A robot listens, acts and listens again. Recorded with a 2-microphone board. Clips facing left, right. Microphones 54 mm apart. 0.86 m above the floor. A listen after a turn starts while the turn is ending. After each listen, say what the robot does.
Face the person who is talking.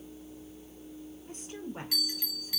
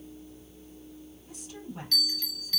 Turn 50° left.
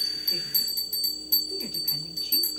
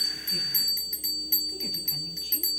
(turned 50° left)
Keep listening.
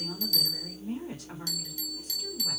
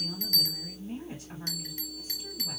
Turn 80° left.
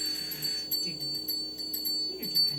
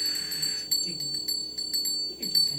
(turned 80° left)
Keep listening.
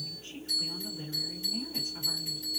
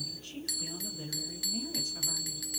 Turn 20° left.
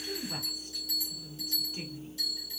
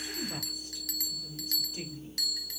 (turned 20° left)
Facing the woman speaking, 2 to 4 m away.